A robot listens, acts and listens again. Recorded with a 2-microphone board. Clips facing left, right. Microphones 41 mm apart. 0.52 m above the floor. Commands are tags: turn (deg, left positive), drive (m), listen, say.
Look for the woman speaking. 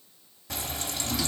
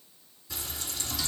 <listen/>
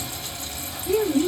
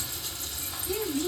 <turn deg="60"/>
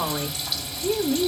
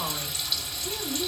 <turn deg="30"/>
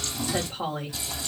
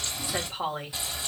<turn deg="-20"/>
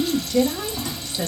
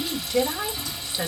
<turn deg="-20"/>
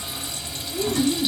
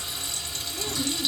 <say>Found it: a woman speaking, straight ahead.</say>